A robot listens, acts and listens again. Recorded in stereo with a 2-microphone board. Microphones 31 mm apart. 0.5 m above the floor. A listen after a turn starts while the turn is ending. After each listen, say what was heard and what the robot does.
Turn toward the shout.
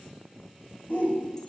The shout: about 55° left or 125° left. Turn 55° left.
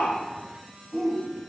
Facing the shout.